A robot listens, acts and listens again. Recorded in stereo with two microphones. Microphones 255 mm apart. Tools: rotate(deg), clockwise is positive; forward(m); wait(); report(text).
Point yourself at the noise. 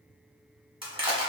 rotate(20)
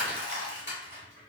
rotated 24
rotate(135)
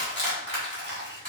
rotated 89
rotate(45)
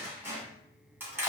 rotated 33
rotate(10)
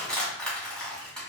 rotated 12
report("Found it: crushing, straight ahead.")